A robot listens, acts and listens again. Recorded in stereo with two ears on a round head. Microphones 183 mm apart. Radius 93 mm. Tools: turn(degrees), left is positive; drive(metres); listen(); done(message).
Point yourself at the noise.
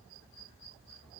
listen()
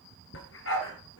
turn(degrees=65)
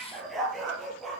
done("Found it: a dog barking, straight ahead.")